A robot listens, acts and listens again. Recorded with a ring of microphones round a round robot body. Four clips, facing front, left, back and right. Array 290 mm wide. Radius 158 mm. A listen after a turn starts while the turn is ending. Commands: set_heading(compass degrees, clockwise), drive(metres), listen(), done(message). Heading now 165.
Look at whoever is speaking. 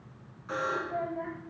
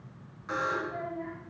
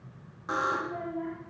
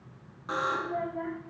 set_heading(235)
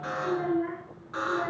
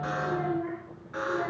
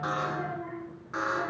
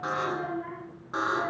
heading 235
set_heading(245)
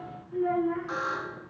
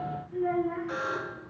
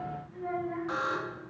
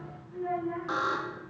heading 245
done("Facing the child speaking.")